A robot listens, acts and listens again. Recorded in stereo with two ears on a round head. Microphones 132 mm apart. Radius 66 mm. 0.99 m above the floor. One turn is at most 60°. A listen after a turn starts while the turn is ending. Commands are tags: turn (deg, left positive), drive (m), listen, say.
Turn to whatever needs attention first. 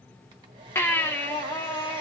<turn deg="15"/>
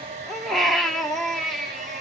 <say>Found it: a baby crying, straight ahead.</say>